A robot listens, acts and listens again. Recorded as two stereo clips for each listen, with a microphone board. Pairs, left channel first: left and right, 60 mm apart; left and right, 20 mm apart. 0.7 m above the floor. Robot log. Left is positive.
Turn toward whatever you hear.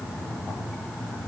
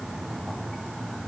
cmd idle
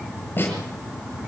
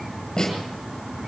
note: The snare drum: about 35° left or 145° left.
cmd yaw +35
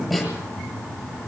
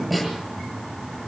end: Facing the snare drum, over 4 m away.